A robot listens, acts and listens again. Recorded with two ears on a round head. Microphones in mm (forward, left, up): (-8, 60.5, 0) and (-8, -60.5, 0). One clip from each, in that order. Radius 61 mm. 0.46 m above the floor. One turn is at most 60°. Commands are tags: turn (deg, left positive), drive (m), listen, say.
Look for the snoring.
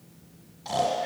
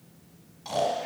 <turn deg="-30"/>
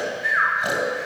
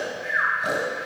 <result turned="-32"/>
<turn deg="20"/>
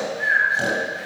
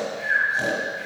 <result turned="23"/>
<say>Found it: snoring, straight ahead.</say>